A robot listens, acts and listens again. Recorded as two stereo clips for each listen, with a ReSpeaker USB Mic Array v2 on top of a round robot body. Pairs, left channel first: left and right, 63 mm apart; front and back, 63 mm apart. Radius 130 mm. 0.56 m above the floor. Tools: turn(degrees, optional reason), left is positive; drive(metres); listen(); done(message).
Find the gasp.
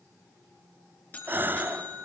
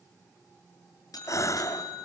turn(degrees=-30, reason="The gasp: 30° right.")
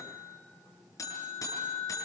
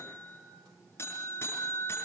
done("I heard a gasp from this way, but can't make it out now.")